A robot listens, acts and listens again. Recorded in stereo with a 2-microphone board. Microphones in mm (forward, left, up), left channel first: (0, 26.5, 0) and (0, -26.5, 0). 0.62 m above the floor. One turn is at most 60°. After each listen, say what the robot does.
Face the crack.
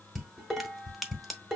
Turn 30° left.
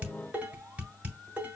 Keep listening.
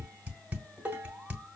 I heard a crack, but can't make it out now. It was about 30° right or 150° left.